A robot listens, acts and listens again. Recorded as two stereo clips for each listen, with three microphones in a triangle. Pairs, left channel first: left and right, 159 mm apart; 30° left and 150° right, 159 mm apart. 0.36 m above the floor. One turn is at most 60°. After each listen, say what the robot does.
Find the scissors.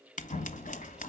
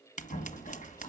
Turn 60° left.
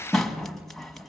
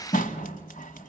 Found it: scissors, straight ahead.